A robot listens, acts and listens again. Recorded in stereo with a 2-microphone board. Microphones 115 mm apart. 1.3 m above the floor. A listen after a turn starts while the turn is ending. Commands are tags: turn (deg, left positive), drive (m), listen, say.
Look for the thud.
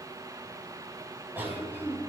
<listen/>
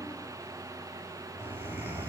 <listen/>
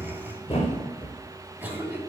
<turn deg="50"/>
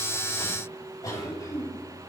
<listen/>
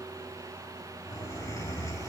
<say>I heard a thud, but can't make it out now. It was about straight ahead or 80° left.</say>